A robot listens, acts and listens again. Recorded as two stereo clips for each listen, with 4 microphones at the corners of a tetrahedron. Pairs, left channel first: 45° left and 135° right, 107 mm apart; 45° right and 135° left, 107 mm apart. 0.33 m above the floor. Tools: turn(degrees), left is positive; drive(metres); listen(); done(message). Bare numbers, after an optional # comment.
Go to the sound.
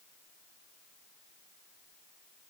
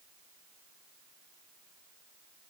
listen()
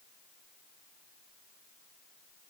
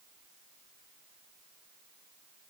listen()
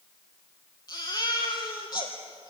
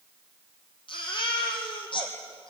drive(1.0)
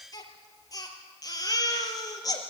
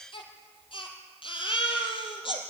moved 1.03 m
# The baby crying is now 10° right.
turn(-10)
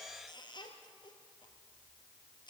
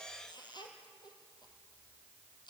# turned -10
listen()
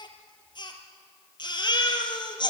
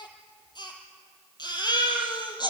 drive(1.0)
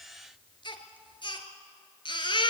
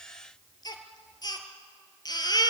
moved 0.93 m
drive(1.0)
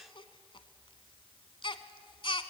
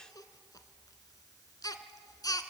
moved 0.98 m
# The baby crying is now 10° left.
turn(10)
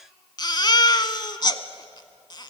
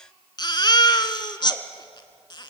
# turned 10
drive(1.0)
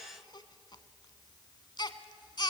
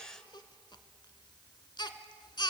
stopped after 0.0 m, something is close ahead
done("Arrived at the baby crying, straight ahead.")